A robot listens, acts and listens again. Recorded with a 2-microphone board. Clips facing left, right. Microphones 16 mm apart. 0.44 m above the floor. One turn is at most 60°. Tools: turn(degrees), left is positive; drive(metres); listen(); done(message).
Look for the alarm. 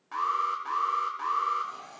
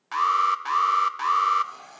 turn(degrees=-60)
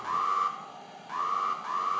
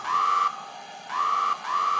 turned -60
turn(degrees=-45)
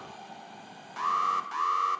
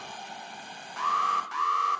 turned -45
turn(degrees=-10)
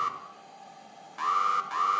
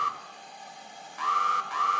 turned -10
done("Found it: an alarm, straight ahead.")